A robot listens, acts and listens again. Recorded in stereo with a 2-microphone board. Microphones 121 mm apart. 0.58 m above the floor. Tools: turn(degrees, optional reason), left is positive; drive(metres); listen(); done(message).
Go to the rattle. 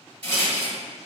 turn(degrees=20, reason="The rattle: about 20° left or 160° left.")
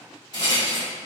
turn(degrees=145, reason="So it is at 145° left.")
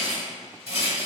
turn(degrees=-20, reason="The rattle is now 20° right.")
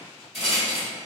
drive(metres=1.0)
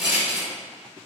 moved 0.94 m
drive(metres=1.0)
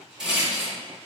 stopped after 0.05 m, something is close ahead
turn(degrees=-10, reason="The rattle is now 10° right.")
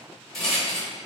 done("I am next to the rattle.")